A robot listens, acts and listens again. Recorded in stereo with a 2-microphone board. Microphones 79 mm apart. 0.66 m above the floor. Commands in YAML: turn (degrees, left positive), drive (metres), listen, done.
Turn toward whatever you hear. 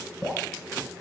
turn: 30
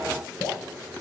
turn: 140
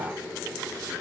listen: true
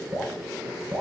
turn: -20
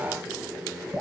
done: "Facing the dripping."